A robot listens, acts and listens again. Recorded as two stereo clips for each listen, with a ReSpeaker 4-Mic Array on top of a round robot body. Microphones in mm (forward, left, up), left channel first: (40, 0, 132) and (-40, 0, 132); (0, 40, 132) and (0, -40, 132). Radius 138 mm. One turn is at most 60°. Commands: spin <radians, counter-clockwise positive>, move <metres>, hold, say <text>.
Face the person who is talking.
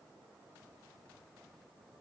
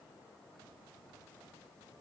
hold
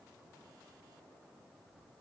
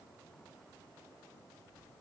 hold
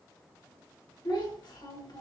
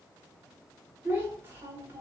spin -0.52
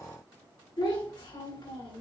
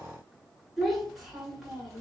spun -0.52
say Found it: a child speaking, straight ahead, 2 to 4 m away.